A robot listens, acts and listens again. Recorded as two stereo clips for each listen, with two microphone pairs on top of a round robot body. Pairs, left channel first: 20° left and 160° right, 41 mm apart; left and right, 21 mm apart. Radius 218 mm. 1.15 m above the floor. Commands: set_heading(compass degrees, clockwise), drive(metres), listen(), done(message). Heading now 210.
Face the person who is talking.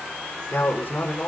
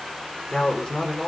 set_heading(155)
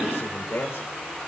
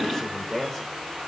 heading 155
set_heading(135)
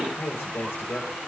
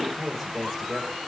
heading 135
done("Facing the man speaking, over 4 m away.")